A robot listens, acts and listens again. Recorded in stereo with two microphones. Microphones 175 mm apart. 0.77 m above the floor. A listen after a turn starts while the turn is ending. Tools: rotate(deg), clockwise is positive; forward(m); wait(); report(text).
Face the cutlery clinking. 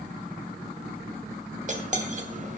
rotate(45)
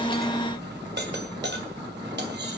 rotate(90)
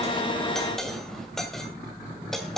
report("Facing the cutlery clinking, 2 to 4 m away.")